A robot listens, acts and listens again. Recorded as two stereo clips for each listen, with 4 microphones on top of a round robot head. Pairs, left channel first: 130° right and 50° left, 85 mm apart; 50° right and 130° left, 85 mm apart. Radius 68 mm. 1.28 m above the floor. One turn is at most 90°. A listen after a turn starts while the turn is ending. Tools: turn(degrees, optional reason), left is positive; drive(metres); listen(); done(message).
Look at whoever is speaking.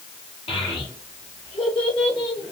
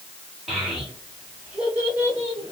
turn(degrees=-90, reason="The child speaking: 160° right.")
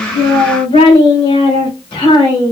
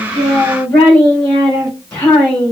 turn(degrees=-90, reason="The child speaking is now 105° right.")
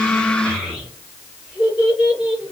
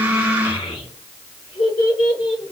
turn(degrees=-25, reason="The child speaking is now 25° right.")
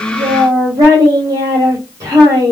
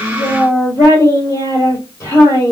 done("Found it: a child speaking, straight ahead, 2 to 4 m away.")